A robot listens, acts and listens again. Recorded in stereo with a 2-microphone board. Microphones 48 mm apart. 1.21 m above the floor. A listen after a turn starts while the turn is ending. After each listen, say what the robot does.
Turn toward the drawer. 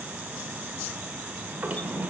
Turn 35° right.
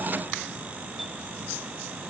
Keep listening.
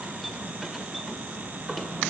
Facing the drawer.